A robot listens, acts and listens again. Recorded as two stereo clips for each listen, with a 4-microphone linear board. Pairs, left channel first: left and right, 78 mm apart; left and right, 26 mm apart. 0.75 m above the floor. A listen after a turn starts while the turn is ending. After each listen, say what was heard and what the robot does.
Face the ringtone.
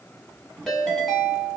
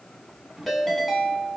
Turn 30° left.
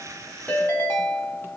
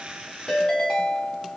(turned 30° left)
So it is at 150° left. Turn 150° left.
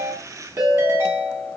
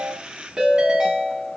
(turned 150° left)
The ringtone is now 45° right. Turn 45° right.
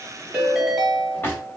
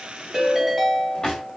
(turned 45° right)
Facing the ringtone, 1 to 2 m away.